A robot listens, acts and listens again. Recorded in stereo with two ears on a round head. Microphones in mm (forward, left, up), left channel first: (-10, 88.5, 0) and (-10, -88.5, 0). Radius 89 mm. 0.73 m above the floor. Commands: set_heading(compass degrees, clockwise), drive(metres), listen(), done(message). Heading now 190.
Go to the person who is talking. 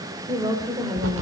set_heading(210)
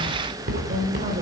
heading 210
set_heading(350)
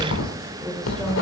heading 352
drive(1.0)
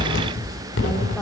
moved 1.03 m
listen()
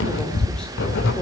listen()
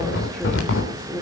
drive(1.0)
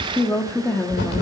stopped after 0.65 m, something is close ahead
set_heading(342)
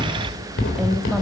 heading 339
done("Arrived at the woman speaking, straight ahead.")